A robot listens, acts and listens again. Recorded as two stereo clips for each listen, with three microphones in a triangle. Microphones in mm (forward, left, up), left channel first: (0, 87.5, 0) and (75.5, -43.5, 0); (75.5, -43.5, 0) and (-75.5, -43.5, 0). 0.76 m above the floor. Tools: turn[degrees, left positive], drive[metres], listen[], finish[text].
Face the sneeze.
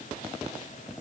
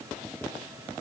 Action: listen[]
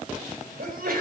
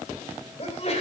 Thought: The sneeze: 45° right.
Action: turn[-45]
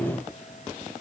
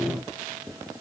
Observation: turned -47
Action: finish[Facing where the sneeze came from. I can't hear it now.]